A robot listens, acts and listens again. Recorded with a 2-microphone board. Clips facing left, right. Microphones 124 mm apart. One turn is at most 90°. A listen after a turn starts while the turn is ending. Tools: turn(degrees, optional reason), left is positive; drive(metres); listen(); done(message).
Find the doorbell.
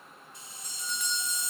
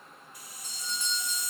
turn(degrees=-30, reason="The doorbell: about 30° right or 150° right.")
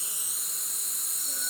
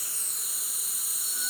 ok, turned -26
listen()
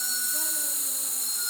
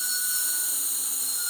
listen()
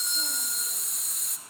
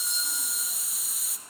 done("I heard a doorbell, but can't make it out now. It was about 5° right or 125° right.")